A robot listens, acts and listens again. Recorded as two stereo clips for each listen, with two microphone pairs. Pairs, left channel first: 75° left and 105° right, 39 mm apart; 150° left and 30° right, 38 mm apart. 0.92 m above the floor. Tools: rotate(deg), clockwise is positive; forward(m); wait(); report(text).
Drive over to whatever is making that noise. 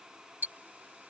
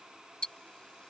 rotate(145)
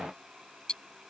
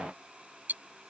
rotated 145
forward(1.0)
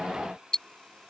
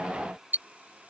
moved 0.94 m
forward(1.0)
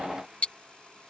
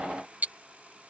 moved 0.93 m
rotate(-15)
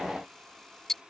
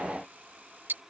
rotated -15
forward(1.0)
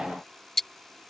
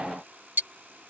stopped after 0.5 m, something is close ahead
report("Arrived at the ticking, straight ahead.")